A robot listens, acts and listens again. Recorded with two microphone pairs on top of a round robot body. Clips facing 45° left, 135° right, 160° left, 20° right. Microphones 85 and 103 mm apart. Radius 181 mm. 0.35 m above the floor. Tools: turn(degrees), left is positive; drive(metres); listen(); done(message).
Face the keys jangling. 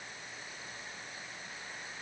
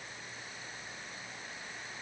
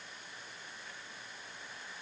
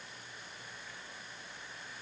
listen()
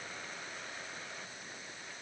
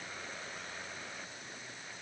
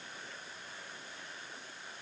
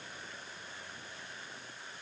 listen()
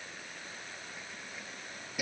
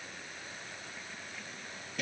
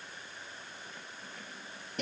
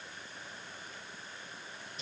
turn(degrees=125)
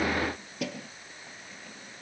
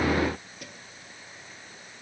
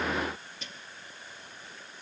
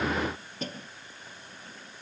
turn(degrees=30)
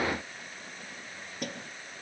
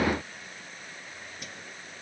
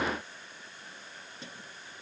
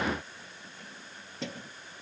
done("Facing the keys jangling.")